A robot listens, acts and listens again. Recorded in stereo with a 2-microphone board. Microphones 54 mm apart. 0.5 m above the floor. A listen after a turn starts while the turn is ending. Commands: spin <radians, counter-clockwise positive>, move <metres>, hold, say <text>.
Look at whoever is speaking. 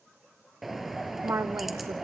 spin -0.96
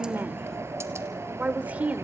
spin -0.61
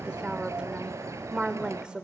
spin -0.44
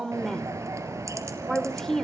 spin 0.17
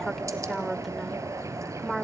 say Facing the woman speaking.